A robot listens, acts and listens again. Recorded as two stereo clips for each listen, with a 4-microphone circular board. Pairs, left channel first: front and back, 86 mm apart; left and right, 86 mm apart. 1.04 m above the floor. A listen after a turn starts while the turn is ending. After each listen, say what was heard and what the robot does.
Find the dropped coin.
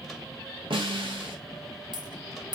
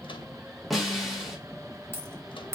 The dropped coin: 150° right. Turn 150° right.
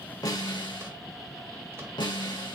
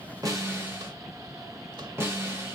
I heard a dropped coin from this way, but can't make it out now.